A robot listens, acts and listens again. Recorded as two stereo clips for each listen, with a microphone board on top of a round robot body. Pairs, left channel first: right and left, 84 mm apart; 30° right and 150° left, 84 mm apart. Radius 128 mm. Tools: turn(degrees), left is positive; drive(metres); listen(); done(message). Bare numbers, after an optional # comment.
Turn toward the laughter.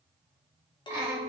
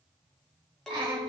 # The laughter: 155° left.
turn(155)
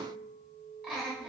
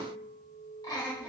# The laughter is now 20° left.
turn(20)
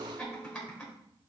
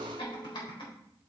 done("Facing the laughter.")